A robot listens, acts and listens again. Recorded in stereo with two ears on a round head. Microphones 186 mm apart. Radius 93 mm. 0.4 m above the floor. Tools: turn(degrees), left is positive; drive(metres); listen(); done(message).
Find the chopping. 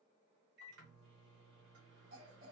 listen()
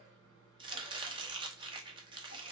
turn(degrees=-25)
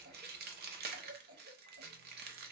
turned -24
turn(degrees=-130)
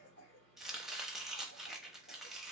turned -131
done("Facing the chopping.")